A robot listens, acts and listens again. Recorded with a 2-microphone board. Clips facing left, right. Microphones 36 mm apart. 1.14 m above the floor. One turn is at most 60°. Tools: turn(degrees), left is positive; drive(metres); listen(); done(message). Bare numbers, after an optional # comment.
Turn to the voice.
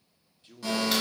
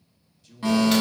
# The man speaking: about 35° left or 145° left.
turn(35)
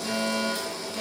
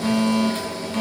listen()
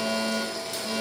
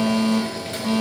listen()
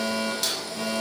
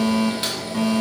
done("I heard a man speaking, but can't make it out now. It was about straight ahead or 110° left.")